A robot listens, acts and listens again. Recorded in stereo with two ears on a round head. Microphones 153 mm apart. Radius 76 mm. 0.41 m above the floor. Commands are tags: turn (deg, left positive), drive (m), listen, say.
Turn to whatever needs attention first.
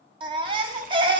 <turn deg="-30"/>
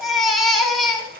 <say>Found it: a baby crying, straight ahead, 1 to 2 m away.</say>